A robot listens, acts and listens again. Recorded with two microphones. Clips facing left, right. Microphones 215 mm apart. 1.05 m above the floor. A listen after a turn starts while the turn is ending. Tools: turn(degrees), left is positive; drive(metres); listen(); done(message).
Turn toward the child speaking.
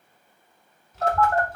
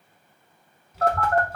turn(degrees=-30)
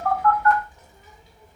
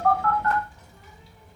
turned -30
turn(degrees=20)
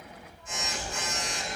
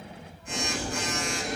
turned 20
done("Facing the child speaking.")